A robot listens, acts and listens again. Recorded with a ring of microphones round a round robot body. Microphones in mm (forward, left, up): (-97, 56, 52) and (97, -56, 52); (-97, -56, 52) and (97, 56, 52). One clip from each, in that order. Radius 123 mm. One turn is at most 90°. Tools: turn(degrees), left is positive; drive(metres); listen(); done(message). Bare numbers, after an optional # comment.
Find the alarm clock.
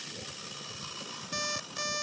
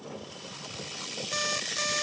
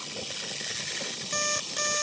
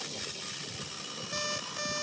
# The alarm clock: 110° right.
turn(-90)
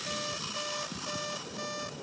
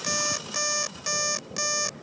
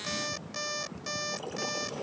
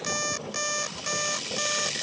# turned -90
# The alarm clock is now 20° right.
turn(-20)
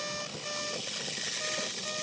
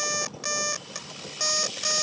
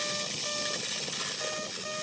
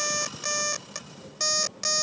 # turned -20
done("Found it: an alarm clock, straight ahead.")